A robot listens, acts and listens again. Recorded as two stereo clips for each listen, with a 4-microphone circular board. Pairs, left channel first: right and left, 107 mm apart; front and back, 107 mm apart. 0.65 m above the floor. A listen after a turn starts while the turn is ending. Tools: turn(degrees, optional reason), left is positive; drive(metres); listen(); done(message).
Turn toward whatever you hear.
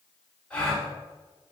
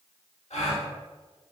turn(degrees=-10, reason="The gasp: 10° right.")
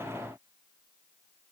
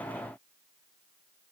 done("I heard a gasp from this way, but can't make it out now.")